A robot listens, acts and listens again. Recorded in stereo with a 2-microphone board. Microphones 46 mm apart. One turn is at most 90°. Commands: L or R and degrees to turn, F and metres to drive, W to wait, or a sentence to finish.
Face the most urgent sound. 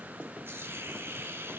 W
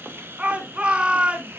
R30
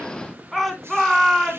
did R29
Found it: a shout, straight ahead.